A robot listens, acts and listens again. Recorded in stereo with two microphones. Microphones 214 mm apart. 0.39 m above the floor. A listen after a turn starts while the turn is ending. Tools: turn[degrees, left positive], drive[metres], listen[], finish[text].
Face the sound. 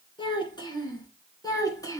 Action: turn[30]
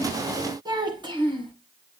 Thought: So it is at 25° right.
Action: turn[-25]
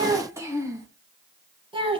Thought: The child speaking is now 25° right.
Action: turn[-25]
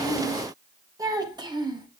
Thought: The child speaking is now 20° right.
Action: turn[-20]
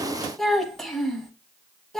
Action: finish[Found it: a child speaking, straight ahead.]